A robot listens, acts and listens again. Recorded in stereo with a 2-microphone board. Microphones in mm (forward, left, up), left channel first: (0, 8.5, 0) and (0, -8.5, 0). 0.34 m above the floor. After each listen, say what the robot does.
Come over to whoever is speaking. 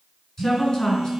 Turn 30° left.
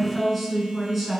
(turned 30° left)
Drive 1.0 m forward.
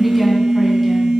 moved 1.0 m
Keep listening.
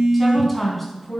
Drive 1.0 m forward.
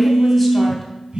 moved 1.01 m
Keep listening.
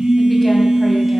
Keep listening.
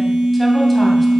Facing where the woman speaking came from. I can't hear it now. I did not reach it.